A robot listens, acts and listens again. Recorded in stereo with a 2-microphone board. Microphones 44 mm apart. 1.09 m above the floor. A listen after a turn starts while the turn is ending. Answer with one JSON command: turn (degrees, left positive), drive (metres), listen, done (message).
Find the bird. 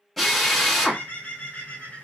{"turn": 40}
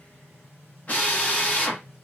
{"listen": true}
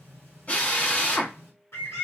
{"turn": 100}
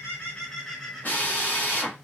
{"done": "Facing the bird."}